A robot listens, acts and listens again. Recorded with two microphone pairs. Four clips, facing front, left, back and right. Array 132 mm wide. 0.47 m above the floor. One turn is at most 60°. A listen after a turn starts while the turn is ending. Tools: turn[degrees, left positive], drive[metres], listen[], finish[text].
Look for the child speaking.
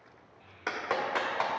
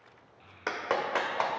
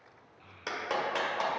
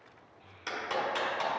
Thought: The child speaking: 145° left.
Action: turn[60]
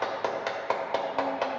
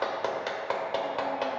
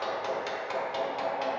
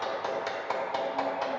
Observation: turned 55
Thought: Nothing new. It was at 90° left.
Action: turn[60]
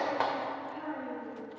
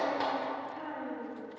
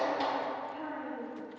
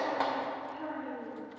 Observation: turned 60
Thought: The child speaking is now 40° left.
Action: turn[40]
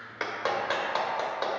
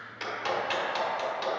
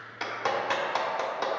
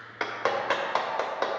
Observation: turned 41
Action: listen[]
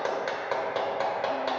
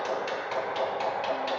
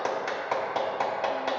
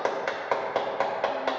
Action: listen[]
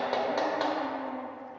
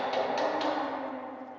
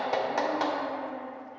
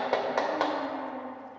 Action: finish[Facing where the child speaking came from. I can't hear it now.]